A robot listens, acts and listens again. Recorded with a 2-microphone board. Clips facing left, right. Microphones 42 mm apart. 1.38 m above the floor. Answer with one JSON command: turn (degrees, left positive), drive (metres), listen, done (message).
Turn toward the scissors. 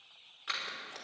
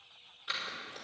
{"turn": 90}
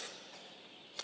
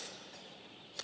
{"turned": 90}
{"turn": 10}
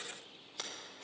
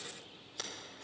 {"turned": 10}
{"turn": 10}
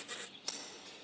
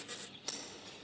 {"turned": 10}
{"done": "Facing the scissors."}